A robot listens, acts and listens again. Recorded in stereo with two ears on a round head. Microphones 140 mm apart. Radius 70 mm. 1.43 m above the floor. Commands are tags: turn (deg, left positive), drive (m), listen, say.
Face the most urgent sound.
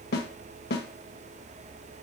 <listen/>
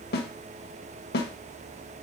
<listen/>
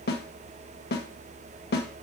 <say>I can't make out anything urgent, only a snare drum.</say>